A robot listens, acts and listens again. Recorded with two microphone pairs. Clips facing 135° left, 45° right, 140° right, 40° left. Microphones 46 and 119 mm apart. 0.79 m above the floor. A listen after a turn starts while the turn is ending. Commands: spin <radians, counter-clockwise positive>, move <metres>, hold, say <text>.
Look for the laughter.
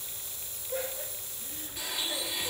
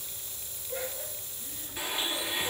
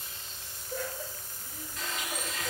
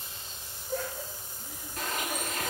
spin 0.96
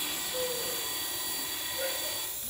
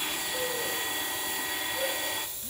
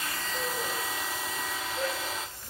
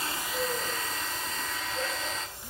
hold
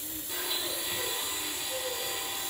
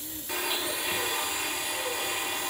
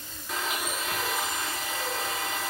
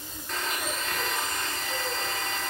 hold
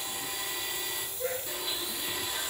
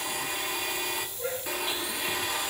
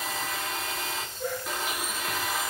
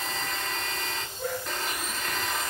spin 0.17
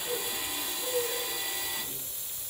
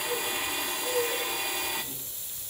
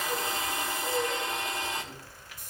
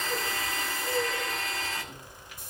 say Facing the laughter, over 4 m away.